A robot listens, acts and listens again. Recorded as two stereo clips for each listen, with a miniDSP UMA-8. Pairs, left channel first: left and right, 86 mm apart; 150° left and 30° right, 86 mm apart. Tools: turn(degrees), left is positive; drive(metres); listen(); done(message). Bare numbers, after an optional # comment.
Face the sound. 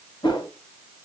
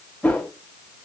# The whoosh: 80° left.
turn(80)
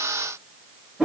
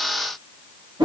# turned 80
# The whoosh is now 10° right.
turn(-10)
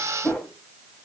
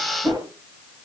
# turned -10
done("Facing the whoosh.")